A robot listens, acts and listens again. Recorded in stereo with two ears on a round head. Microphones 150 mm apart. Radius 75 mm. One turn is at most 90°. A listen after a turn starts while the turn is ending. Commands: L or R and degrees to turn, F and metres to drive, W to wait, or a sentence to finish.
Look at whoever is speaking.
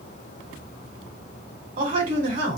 R50
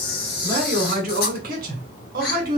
R70
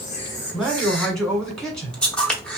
Found it: a man speaking, straight ahead.